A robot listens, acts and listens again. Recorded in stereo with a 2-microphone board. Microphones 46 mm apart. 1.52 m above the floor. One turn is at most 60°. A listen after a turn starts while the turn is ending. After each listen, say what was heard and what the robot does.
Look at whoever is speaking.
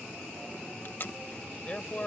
The man speaking: about 30° left or 150° left. Turn 30° left.
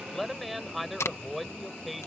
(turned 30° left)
Found it: a man speaking, straight ahead.